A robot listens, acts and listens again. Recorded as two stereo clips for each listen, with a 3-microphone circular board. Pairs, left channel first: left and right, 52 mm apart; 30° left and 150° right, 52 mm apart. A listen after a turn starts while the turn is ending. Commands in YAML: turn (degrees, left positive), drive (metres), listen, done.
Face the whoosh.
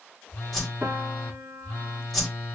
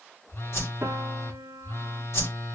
done: "Found it: a whoosh, straight ahead, 1 to 2 m away."